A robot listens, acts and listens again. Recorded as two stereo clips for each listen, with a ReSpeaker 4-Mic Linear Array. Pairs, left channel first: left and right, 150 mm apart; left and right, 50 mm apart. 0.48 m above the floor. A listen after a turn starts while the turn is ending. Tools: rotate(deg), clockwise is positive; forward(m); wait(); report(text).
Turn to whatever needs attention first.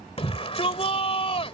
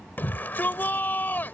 rotate(-40)
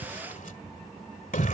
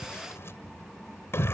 rotate(-95)
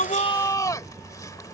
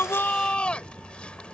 rotate(-25)
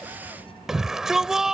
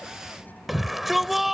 report("Facing the shout.")